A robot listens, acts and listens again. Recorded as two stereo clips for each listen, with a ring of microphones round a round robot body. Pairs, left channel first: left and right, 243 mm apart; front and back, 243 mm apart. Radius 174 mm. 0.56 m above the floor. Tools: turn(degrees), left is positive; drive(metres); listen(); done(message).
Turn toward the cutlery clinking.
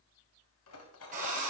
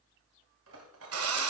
turn(degrees=130)
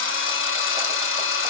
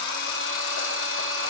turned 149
turn(degrees=-15)
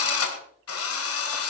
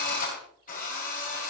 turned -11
listen()
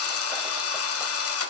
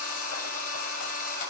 done("I heard cutlery clinking from this way, but can't make it out now.")